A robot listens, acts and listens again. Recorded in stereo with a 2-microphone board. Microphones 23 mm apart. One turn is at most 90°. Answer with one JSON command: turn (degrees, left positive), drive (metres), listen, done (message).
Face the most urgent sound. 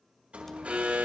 {"turn": -75}
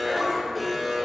{"done": "Facing the alarm, over 4 m away."}